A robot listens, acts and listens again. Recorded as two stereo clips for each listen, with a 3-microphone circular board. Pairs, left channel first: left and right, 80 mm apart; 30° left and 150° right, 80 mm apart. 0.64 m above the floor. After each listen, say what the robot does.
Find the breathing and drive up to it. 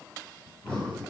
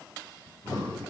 Turn 15° left.
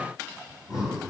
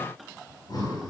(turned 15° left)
Drive 1.0 m forward.
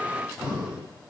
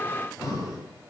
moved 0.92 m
Turn 15° right.
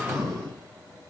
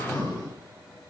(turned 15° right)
Drive 1.0 m forward.
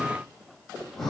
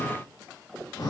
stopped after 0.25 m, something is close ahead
Blocked. The breathing is further on, straight ahead.